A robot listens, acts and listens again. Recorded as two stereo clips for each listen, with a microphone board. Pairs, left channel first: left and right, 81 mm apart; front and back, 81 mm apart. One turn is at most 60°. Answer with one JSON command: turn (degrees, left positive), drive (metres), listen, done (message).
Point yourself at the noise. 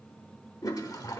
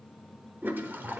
{"turn": 60}
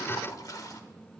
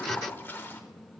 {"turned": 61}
{"turn": 60}
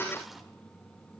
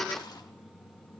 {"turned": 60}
{"listen": true}
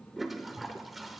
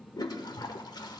{"done": "Facing the toilet flushing."}